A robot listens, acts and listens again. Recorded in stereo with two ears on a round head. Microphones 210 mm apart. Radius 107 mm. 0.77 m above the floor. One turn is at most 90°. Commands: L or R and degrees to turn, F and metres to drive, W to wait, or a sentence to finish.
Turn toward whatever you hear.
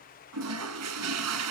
R90
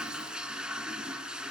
Found it: a toilet flushing, straight ahead, 2 to 4 m away.